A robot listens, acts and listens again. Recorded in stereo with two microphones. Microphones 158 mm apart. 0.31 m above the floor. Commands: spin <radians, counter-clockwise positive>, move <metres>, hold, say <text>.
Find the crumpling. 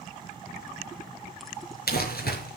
spin 1.57
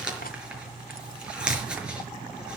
say Facing the crumpling.